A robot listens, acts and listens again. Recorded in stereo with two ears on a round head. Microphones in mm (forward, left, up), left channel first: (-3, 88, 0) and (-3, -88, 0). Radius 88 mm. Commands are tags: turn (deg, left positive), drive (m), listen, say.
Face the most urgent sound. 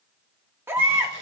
<turn deg="-30"/>
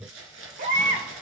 <turn deg="-135"/>
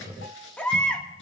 <say>Found it: a baby crying, straight ahead.</say>